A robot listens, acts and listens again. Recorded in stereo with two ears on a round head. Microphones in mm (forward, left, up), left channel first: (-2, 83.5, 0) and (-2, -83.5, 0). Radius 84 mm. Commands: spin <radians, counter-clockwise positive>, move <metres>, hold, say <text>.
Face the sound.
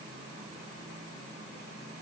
hold
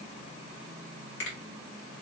spin 1.22
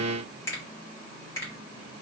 spin 0.26
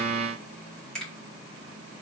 say Facing the finger snap.